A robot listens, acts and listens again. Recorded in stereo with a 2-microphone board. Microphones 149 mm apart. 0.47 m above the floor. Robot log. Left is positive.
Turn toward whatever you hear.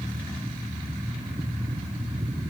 cmd idle
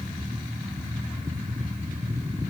cmd idle
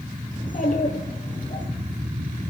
note: The child speaking: about 65° left or 115° left.
cmd yaw +65
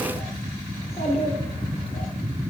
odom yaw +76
note: So it is at 40° left.
cmd yaw +40
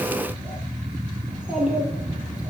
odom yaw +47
end: Facing the child speaking.